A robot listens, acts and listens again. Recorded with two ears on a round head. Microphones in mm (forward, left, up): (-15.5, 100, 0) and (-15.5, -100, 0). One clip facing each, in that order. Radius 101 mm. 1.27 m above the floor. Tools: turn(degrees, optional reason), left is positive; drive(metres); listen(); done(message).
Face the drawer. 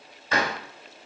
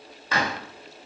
turn(degrees=65, reason="The drawer: about 65° left or 115° left.")
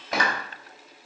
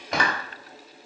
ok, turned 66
done("Facing the drawer.")